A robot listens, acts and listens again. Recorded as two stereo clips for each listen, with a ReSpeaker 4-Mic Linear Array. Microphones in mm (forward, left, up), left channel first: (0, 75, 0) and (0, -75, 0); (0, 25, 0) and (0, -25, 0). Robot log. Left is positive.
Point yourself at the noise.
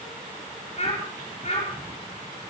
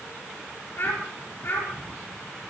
note: The child speaking: about 50° left or 130° left.
cmd yaw +50
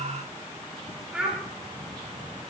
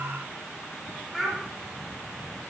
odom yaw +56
end: Found it: a child speaking, straight ahead.